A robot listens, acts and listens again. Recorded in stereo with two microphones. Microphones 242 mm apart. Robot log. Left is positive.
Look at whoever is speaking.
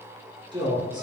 note: The man speaking: about 20° right or 160° right.
cmd yaw -20
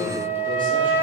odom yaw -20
note: So it is at 140° right.
cmd yaw -140
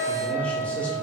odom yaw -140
cmd idle
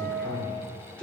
end: Found it: a man speaking, straight ahead.